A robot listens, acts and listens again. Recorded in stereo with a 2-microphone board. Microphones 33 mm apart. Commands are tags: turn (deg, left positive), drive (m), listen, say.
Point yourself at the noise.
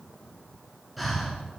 <turn deg="30"/>
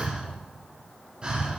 <turn deg="-30"/>
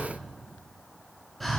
<say>Found it: breathing, straight ahead, under 1 m away.</say>